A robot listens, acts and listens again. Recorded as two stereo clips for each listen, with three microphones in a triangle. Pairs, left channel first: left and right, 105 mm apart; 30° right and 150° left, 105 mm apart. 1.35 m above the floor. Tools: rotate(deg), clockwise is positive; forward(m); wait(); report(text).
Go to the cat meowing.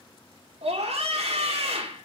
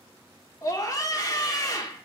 wait()
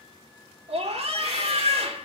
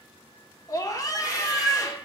rotate(-65)
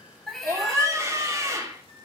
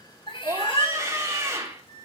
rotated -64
forward(1.0)
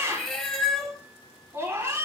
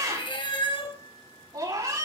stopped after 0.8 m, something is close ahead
report("Blocked. The cat meowing is further on, straight ahead.")